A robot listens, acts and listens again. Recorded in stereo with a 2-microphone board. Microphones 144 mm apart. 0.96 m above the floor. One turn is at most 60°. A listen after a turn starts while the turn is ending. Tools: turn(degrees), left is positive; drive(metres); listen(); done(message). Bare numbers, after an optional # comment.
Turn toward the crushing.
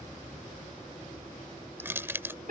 # The crushing: about 15° right or 165° right.
turn(-15)
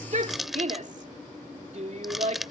done("Facing the crushing.")